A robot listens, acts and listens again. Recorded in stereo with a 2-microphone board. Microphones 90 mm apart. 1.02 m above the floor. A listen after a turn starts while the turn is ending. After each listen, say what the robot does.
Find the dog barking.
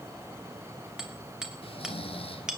Keep listening.
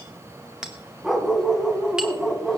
Turn 30° right.
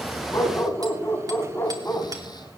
Turn 30° left.
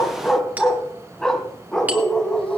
Facing the dog barking, 1 to 2 m away.